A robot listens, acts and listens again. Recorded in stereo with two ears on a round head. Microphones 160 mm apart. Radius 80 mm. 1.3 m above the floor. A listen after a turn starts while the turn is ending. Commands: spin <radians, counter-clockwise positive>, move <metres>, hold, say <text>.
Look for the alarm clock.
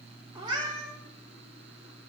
hold
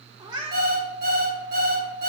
spin -1.05
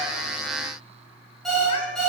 say Facing the alarm clock.